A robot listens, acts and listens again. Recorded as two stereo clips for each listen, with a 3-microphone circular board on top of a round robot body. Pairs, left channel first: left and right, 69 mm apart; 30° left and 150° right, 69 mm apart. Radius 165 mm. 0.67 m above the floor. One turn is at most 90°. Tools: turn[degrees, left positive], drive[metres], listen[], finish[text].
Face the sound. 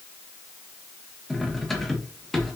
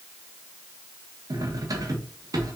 Thought: The cutlery clinking: 175° left.
Action: turn[90]
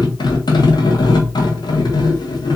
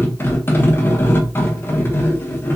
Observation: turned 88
Thought: The cutlery clinking is now 90° left.
Action: turn[90]
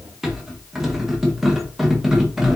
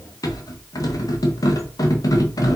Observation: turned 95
Action: finish[Facing the cutlery clinking.]